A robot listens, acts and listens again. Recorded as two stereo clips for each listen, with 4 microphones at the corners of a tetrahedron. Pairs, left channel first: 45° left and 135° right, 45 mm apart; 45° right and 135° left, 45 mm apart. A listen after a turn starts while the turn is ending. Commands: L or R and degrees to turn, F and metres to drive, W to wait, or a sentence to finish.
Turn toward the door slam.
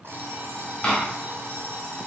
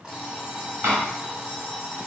L110
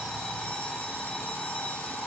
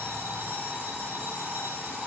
I heard a door slam from this way, but can't make it out now.